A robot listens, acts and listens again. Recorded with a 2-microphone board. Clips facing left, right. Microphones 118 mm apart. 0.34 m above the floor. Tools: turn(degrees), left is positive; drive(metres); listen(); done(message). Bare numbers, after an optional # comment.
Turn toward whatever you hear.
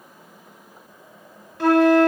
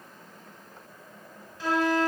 # The flute: about 75° left or 105° left.
turn(75)
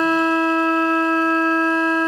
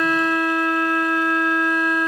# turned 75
# So it is at 30° left.
turn(30)
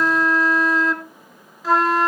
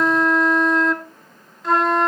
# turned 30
done("Facing the flute, 1 to 2 m away.")